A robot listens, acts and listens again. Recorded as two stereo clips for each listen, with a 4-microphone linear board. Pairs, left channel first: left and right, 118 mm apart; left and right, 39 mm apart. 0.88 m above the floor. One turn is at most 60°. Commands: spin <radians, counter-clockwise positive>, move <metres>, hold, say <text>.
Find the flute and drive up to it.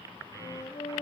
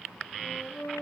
spin 1.05
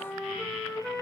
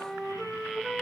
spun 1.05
move 1.0
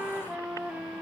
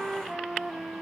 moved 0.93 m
move 1.0
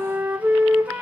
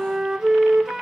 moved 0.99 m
spin -0.26
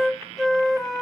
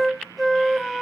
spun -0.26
move 1.0
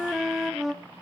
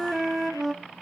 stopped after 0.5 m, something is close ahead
say I am next to the flute.